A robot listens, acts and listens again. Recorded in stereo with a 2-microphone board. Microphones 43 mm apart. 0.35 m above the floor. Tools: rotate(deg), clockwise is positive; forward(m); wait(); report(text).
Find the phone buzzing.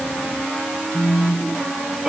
rotate(-70)
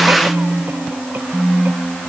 rotate(-10)
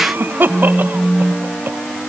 report("Facing the phone buzzing.")